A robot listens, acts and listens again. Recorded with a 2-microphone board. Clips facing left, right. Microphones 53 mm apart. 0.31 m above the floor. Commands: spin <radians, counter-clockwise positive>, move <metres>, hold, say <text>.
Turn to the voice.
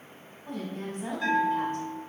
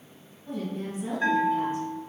spin 0.87
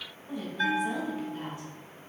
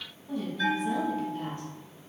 spin 0.35
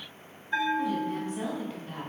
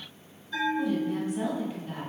say Found it: a woman speaking, straight ahead.